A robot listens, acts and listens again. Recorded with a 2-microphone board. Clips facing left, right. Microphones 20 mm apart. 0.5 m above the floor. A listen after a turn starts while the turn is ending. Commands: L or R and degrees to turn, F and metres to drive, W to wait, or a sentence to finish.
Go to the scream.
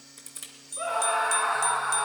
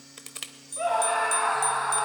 R25
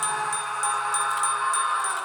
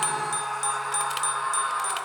F1.0
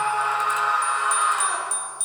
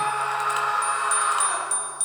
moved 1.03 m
F1.0
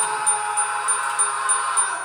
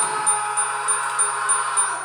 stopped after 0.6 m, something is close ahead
I am next to the scream.